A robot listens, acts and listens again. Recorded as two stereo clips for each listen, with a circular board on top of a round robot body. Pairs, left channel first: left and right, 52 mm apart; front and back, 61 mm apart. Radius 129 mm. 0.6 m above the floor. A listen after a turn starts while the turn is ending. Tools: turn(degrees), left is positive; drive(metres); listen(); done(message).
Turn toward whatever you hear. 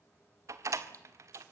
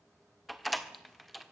turn(degrees=-90)
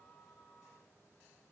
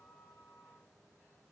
done("I heard a door slam from this way, but can't make it out now.")